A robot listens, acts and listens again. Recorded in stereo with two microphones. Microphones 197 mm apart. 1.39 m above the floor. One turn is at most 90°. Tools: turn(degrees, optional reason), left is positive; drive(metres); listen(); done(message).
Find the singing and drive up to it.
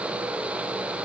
listen()
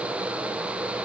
listen()
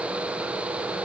done("I can't make out singing.")